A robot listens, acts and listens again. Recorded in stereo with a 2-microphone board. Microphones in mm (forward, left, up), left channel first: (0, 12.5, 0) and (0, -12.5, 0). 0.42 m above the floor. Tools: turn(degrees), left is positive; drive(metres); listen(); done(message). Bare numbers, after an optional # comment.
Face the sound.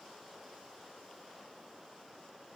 listen()
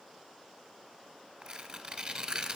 # The tearing paper: about 45° right or 135° right.
turn(-45)
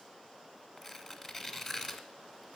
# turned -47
done("Facing the tearing paper, 1 to 2 m away.")